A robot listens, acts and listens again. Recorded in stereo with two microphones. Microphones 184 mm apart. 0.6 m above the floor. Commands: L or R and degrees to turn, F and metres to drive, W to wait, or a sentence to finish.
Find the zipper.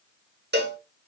W
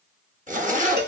R45
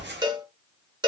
R85
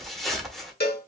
Facing the zipper, under 1 m away.